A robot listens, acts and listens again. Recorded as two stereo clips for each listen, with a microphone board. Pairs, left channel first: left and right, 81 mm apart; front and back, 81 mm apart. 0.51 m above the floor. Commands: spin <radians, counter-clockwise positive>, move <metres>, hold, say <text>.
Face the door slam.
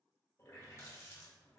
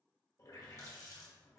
hold
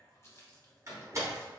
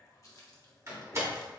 spin -2.36
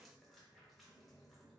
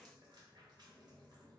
say Facing where the door slam came from. I can't hear it now.